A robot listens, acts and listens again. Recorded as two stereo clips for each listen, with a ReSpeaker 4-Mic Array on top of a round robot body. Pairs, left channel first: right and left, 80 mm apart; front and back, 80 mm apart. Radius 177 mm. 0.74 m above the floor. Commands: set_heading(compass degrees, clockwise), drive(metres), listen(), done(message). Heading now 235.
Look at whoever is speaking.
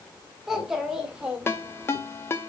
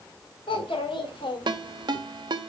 set_heading(220)
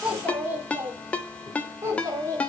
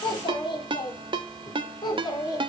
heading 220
set_heading(180)
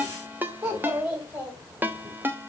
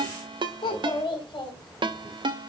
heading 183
set_heading(163)
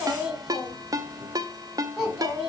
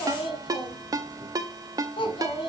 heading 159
done("Found it: a child speaking, straight ahead, 2 to 4 m away.")